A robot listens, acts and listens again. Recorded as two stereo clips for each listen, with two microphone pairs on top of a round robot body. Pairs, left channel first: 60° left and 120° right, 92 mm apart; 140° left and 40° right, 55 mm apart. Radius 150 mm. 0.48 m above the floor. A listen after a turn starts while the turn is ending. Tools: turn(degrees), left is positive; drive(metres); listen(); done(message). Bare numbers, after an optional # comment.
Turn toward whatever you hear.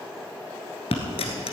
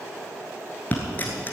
# The dropped coin: 75° left.
turn(75)
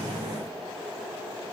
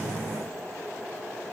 done("I heard a dropped coin from this way, but can't make it out now.")